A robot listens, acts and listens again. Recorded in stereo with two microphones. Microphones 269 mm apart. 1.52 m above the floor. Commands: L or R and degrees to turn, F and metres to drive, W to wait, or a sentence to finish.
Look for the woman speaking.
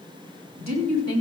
R90
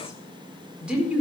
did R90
Found it: a woman speaking, straight ahead.